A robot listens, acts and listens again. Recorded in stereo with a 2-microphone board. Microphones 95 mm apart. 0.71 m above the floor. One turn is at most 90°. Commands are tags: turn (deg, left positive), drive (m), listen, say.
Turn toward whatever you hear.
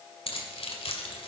<turn deg="90"/>
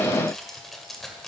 <say>Facing the keys jangling, 1 to 2 m away.</say>